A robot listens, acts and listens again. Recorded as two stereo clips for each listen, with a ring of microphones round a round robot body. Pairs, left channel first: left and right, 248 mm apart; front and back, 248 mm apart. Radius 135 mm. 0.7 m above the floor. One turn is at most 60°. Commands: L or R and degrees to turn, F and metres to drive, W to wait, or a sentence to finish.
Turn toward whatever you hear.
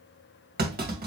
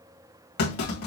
R40
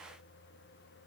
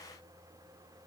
I heard a clunk from this way, but can't make it out now.